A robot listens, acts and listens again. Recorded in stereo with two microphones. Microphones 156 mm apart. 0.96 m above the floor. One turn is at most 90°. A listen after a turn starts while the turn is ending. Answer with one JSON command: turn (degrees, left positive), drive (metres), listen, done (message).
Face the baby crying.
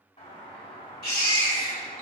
{"turn": 90}
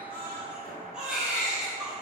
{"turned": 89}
{"done": "Facing the baby crying."}